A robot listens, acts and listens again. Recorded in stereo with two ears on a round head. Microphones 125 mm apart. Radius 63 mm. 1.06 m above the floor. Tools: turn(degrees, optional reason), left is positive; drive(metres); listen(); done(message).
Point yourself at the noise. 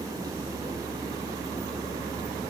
listen()
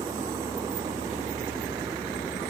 listen()
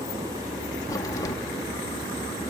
turn(degrees=25, reason="The crack: about 25° left or 155° left.")
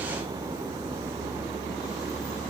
listen()
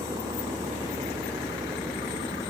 done("I heard a crack, but can't make it out now. It was about straight ahead or 130° left.")